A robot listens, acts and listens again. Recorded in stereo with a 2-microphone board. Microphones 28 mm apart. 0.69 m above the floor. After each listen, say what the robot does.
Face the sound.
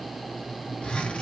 Turn 50° left.
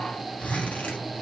Turn 75° left.
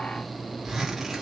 Turn 10° right.
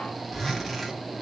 Found it: a zipper, straight ahead, 1 to 2 m away.